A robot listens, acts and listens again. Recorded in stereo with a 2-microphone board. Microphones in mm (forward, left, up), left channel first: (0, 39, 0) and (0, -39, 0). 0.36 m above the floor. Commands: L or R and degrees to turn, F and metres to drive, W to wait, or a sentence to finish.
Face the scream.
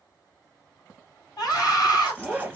L55
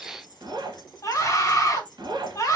L55
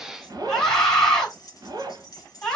L10
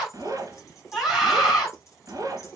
Found it: a scream, straight ahead, 2 to 4 m away.